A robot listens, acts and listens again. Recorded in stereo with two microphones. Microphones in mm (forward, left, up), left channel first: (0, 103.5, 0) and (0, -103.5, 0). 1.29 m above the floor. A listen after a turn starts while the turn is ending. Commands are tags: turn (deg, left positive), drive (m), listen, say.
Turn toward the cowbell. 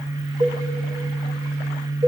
<turn deg="-40"/>
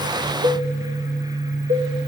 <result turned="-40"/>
<turn deg="-100"/>
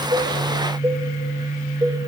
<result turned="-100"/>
<turn deg="-20"/>
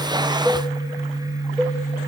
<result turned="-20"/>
<say>Found it: a cowbell, straight ahead, under 1 m away.</say>